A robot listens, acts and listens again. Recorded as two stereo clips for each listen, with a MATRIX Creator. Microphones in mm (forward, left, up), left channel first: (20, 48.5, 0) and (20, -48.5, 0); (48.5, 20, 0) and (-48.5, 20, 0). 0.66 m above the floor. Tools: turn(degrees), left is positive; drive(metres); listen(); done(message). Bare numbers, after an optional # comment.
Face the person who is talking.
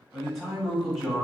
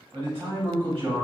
# The man speaking: straight behind.
turn(180)
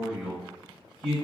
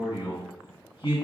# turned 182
done("Found it: a man speaking, straight ahead, 1 to 2 m away.")